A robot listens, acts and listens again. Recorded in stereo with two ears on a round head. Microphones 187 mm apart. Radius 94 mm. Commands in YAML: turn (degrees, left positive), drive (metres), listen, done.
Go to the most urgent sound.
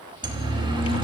turn: -25
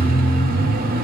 turn: -135
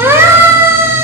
turn: -10
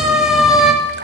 drive: 1.0
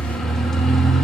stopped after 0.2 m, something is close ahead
done: "Blocked. The siren is further on, straight ahead."